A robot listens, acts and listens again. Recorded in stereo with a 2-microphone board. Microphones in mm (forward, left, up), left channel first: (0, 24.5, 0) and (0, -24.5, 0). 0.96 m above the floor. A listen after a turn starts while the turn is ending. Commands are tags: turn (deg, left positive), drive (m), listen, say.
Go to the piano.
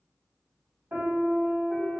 <turn deg="-50"/>
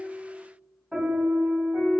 <turn deg="-10"/>
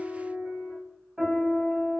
<drive m="1.0"/>
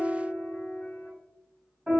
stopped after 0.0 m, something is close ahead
<turn deg="10"/>
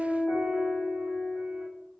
<say>Something is in my way. I am facing the piano but have not reached it.</say>